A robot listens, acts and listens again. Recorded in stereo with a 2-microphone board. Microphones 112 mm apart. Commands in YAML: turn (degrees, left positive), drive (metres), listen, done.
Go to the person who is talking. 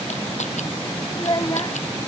turn: 35
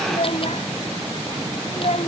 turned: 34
turn: 110
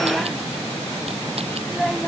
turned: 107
drive: 1.0
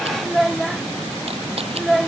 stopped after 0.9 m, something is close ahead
done: "I am next to the child speaking."